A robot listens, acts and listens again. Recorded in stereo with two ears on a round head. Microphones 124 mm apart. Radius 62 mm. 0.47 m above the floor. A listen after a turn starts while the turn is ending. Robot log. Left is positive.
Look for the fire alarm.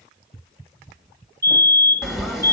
note: The fire alarm: about 20° right or 160° right.
cmd yaw -20
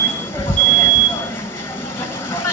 note: So it is at 135° right.
cmd yaw -135
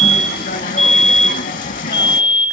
note: The fire alarm is now 45° right.
cmd yaw -45
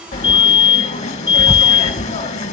note: The fire alarm is now 30° right.
cmd yaw -30
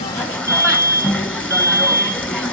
note: The fire alarm is now 15° left.
cmd yaw +15
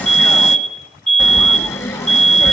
end: Facing the fire alarm.